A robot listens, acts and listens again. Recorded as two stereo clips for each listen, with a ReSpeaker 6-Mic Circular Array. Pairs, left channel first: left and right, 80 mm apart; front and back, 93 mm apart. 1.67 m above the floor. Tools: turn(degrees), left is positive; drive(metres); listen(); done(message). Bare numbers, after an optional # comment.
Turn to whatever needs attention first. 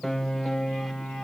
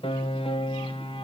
listen()
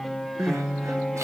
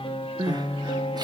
# The crying: 140° right.
turn(-140)
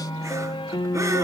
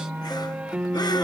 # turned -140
listen()
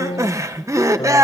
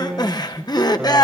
# The crying is now 40° right.
turn(-40)
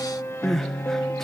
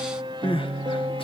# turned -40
done("Facing the crying.")